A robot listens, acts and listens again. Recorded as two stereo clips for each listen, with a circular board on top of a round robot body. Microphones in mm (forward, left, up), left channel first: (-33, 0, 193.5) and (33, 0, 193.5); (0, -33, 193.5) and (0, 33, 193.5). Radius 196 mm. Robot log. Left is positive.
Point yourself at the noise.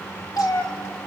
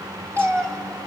note: The cat meowing: 145° left.
cmd yaw +145
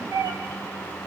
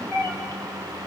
note: The cat meowing is now 40° right.
cmd yaw -40
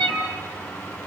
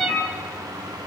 end: Found it: a cat meowing, straight ahead.